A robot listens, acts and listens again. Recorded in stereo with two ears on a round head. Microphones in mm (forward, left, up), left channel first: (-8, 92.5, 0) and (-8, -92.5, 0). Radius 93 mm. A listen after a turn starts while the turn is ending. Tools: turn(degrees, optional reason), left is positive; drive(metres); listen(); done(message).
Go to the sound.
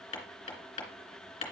turn(degrees=30, reason="The hammering: about 30° left or 150° left.")
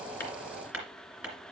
drive(metres=1.0)
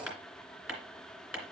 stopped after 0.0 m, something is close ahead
done("Something is in my way. I am facing the hammering but have not reached it.")